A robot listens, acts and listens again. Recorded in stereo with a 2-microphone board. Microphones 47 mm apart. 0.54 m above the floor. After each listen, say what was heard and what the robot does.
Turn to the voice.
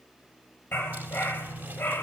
Keep listening.
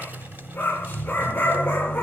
Keep listening.
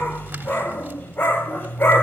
I can't make out anyone speaking, only a dog barking.